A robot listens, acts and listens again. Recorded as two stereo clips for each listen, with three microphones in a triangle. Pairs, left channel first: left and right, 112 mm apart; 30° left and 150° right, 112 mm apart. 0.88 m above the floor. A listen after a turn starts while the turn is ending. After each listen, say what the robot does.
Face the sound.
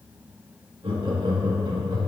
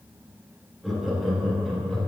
Turn 50° right.
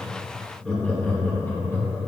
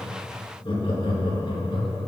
Turn 35° left.
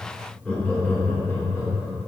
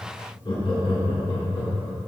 Turn 35° left.
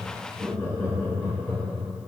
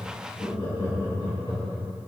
Turn 15° left.
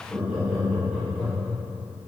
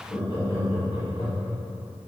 Found it: laughter, straight ahead.